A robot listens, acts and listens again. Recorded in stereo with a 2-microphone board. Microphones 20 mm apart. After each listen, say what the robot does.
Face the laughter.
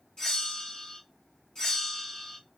Keep listening.
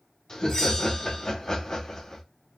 Turn 35° left.
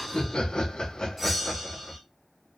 Turn 100° left.
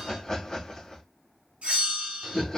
Turn 40° left.
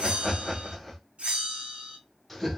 Facing the laughter, 1 to 2 m away.